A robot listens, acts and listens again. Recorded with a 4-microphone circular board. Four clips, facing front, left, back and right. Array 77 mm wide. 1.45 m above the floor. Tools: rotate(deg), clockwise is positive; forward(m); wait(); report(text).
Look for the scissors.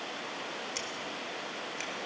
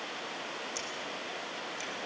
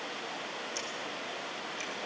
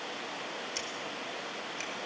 rotate(35)
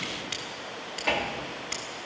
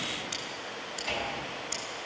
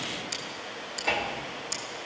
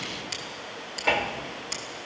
rotate(10)
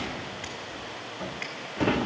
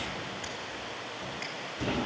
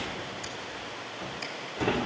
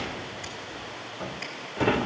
wait()
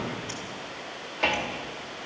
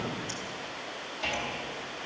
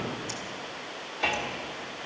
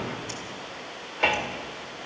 wait()
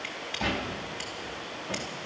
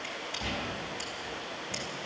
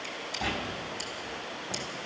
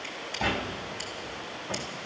report("Facing the scissors, 2 to 4 m away.")